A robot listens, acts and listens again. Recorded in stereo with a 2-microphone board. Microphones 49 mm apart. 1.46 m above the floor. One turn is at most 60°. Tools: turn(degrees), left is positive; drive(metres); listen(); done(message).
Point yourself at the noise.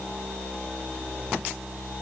listen()
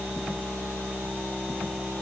listen()
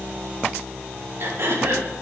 turn(degrees=-60)
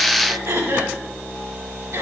turn(degrees=-60)
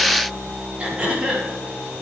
turn(degrees=-20)
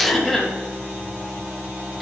done("Found it: throat clearing, straight ahead.")